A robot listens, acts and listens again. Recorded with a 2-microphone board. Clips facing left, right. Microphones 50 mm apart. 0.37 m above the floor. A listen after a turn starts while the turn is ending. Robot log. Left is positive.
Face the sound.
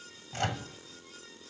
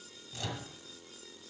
note: The microwave: about 60° left or 120° left.
cmd yaw +60
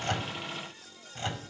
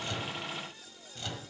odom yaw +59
note: So it is at 30° left.
cmd yaw +30
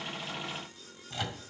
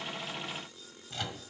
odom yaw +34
end: Found it: a microwave, straight ahead.